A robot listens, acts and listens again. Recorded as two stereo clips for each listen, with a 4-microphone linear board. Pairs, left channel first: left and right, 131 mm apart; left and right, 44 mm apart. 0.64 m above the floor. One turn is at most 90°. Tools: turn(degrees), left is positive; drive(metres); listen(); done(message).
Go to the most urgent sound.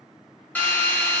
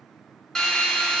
listen()
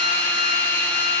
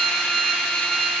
listen()
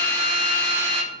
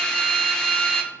done("I can't make out anything urgent, only a drill.")